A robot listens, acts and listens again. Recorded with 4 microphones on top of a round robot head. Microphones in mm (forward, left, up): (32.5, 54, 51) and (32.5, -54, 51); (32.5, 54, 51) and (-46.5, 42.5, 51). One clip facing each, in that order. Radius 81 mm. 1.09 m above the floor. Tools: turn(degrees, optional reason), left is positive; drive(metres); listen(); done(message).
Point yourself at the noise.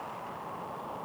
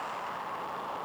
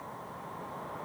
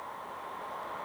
listen()
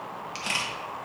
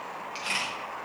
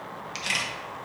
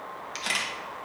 turn(degrees=140, reason="The camera shutter: 140° left.")
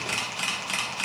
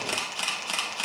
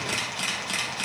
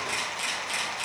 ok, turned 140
turn(degrees=-25, reason="The camera shutter is now 25° right.")
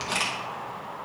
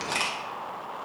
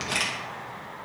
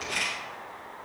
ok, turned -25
done("Facing the camera shutter, 1 to 2 m away.")